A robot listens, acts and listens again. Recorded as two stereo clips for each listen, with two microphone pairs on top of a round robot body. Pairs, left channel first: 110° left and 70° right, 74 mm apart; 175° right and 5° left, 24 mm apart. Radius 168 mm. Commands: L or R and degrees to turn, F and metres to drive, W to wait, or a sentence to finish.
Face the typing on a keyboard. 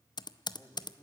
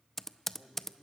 L95
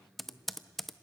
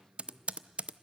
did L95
L20
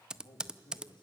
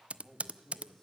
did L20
Found it: typing on a keyboard, straight ahead.